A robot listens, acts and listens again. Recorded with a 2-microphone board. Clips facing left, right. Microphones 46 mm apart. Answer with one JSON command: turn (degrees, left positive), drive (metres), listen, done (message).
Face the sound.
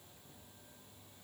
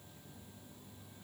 {"listen": true}
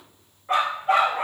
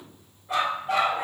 {"turn": 55}
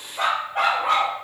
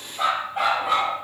{"turn": 55}
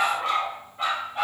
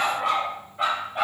{"turn": -10}
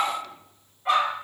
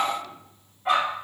{"done": "Facing the dog barking, over 4 m away."}